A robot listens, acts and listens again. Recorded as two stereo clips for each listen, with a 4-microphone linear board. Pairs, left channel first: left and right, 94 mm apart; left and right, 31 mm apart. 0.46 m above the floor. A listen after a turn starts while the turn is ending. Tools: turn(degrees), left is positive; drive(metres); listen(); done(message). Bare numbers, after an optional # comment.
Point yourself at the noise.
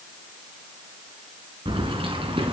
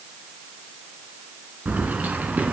# The keys jangling: about 70° right or 110° right.
turn(-70)
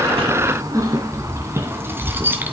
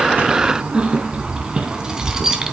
# So it is at 15° right.
turn(-15)
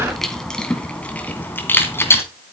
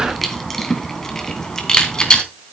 # The keys jangling is now 25° left.
turn(25)
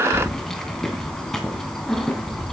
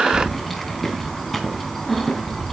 done("Facing the keys jangling, 2 to 4 m away.")